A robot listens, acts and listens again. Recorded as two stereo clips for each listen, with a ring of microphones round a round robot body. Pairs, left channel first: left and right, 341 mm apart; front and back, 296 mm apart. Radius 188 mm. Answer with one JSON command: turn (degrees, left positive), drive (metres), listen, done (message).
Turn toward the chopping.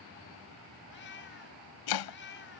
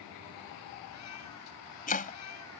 {"turn": 65}
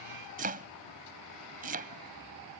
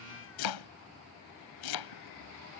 {"turn": -25}
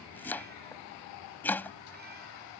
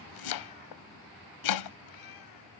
{"done": "Found it: chopping, straight ahead."}